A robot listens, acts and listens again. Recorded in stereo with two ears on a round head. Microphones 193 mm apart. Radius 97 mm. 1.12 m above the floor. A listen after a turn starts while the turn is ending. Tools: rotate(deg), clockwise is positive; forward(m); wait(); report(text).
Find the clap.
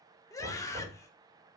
wait()
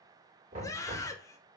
wait()
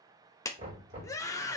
rotate(-15)
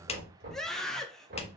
rotate(-150)
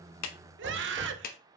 rotate(-40)
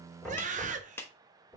rotate(-10)
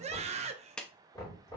report("Facing the clap, under 1 m away.")